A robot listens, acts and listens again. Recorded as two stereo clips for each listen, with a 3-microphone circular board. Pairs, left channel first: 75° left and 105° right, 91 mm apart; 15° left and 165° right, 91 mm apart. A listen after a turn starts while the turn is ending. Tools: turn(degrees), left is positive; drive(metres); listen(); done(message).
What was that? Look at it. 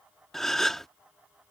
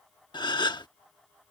turn(degrees=-10)
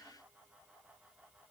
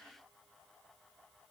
done("Facing where the gasp came from. I can't hear it now.")